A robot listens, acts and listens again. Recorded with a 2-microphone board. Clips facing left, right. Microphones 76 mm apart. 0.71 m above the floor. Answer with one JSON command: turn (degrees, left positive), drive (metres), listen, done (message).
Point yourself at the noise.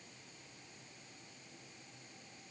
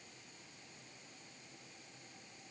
{"listen": true}
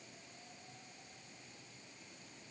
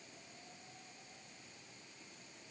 {"listen": true}
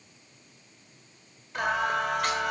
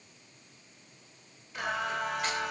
{"turn": 65}
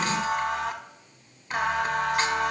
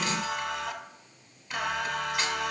{"turn": 45}
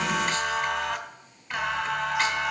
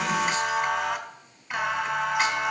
{"done": "Facing the singing."}